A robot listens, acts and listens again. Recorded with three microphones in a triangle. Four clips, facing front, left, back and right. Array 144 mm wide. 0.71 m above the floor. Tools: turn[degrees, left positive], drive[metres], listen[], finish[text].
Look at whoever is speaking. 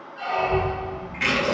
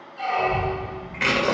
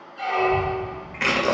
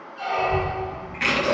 Thought: The child speaking: 65° right.
Action: turn[-65]
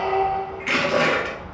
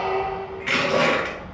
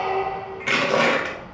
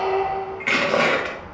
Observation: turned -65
Thought: The child speaking is now 10° left.
Action: turn[10]
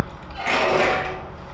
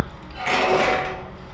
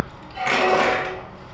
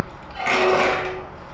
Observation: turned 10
Action: finish[Facing the child speaking.]